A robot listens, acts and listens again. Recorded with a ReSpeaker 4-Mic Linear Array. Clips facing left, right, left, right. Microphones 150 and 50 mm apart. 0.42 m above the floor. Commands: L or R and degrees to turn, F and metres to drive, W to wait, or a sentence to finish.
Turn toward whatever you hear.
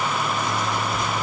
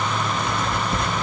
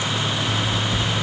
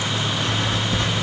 R60
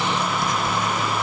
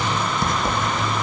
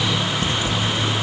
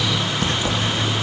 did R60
R55
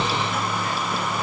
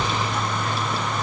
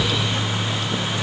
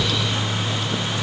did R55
W
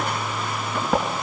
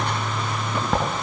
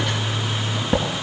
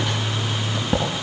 Found it: writing, straight ahead, over 4 m away.